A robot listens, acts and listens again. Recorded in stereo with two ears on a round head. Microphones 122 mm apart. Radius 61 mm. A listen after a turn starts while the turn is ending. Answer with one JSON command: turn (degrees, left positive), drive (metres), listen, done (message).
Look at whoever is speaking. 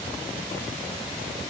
{"listen": true}
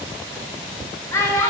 {"turn": 20}
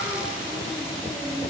{"listen": true}
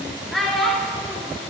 {"done": "Found it: a child speaking, straight ahead."}